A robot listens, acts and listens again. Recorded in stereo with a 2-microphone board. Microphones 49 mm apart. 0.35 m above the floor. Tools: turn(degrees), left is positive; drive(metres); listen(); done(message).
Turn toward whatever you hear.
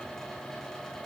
listen()
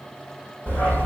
turn(degrees=55)
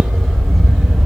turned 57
done("Found it: a dog barking, straight ahead, 2 to 4 m away.")